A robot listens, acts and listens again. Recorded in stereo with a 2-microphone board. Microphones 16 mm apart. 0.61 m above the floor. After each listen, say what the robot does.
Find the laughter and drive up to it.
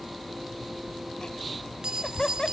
Turn 50° left.
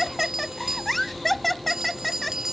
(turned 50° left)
Drive 1.0 m forward.
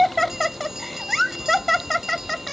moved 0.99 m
Drive 1.0 m forward.
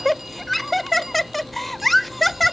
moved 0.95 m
Drive 1.0 m forward.
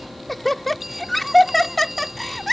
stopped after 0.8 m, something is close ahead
Turn 10° left.
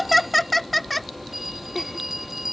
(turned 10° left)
Arrived at the laughter, straight ahead.